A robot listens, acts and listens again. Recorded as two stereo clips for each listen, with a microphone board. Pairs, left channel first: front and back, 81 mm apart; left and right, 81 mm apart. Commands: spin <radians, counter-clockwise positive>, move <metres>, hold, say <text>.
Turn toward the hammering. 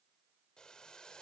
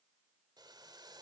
hold
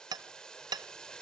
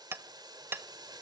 spin -2.62
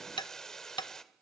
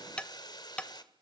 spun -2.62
spin 0.26
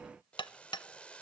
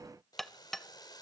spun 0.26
say Found it: hammering, straight ahead.